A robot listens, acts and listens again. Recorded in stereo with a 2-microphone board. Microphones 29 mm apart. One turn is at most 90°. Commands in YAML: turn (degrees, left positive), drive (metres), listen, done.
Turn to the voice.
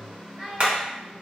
turn: 30
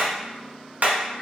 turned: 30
listen: true
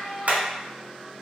turn: 90
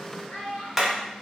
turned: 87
turn: 55
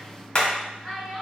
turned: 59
done: "Found it: a child speaking, straight ahead, 1 to 2 m away."